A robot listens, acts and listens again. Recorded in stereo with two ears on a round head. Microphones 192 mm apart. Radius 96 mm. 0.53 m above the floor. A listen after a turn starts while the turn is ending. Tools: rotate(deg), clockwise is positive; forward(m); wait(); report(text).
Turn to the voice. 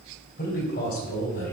rotate(-55)
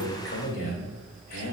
rotate(-45)
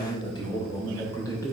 rotate(-15)
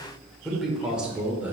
rotate(10)
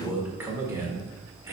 rotate(15)
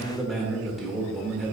report("Found it: a man speaking, straight ahead, 1 to 2 m away.")